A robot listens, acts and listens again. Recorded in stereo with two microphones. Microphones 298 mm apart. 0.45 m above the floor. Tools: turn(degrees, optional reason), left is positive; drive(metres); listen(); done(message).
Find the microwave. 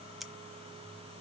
listen()
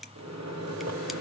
turn(degrees=-60, reason="The microwave: about 60° right or 120° right.")
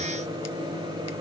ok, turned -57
turn(degrees=-15, reason="So it is at 15° right.")
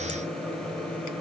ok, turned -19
done("Found it: a microwave, straight ahead.")